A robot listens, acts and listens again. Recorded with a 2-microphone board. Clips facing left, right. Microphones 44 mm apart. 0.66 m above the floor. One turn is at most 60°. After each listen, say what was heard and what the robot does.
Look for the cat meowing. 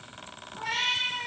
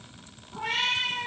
The cat meowing: about 70° right or 110° right. Turn 60° right.
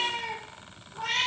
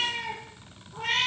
So it is at 35° right. Turn 35° right.
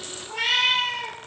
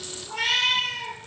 The cat meowing is now 15° left. Turn 15° left.
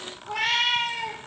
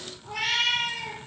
The cat meowing is now 15° left. Turn 15° left.
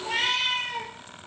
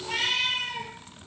The cat meowing is now 10° left. Turn 10° left.
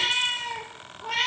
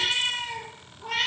Found it: a cat meowing, straight ahead, 2 to 4 m away.